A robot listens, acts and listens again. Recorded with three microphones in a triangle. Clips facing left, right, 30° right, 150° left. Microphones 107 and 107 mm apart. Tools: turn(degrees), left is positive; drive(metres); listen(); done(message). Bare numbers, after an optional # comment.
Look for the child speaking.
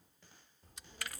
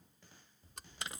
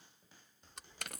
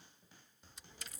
# The child speaking: 70° left.
turn(70)
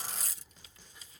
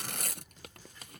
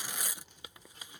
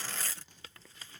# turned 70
# The child speaking is now 15° left.
turn(15)
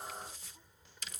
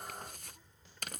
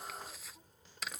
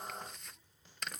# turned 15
# The child speaking is now 15° left.
turn(15)
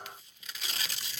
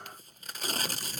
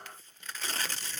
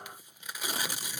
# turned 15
listen()
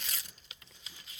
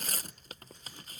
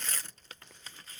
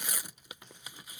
# The child speaking is now 10° left.
turn(10)
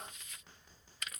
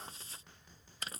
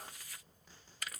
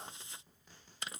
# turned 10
done("Facing the child speaking.")